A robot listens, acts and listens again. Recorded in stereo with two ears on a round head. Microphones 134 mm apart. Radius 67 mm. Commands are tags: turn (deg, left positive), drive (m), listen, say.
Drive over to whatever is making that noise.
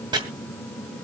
<turn deg="-30"/>
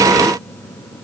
<listen/>
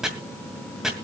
<drive m="1.0"/>
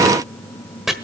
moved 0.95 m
<drive m="1.0"/>
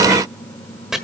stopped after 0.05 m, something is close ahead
<say>Arrived at the chopping, straight ahead.</say>